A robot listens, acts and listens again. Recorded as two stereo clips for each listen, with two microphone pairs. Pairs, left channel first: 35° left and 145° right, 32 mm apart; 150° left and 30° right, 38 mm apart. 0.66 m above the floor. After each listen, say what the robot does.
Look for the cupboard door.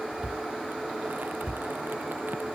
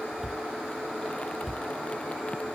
Turn 115° right.
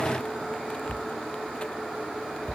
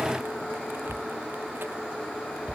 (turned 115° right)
Turn 20° left.
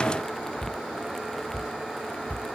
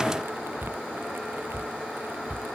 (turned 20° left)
Facing the cupboard door.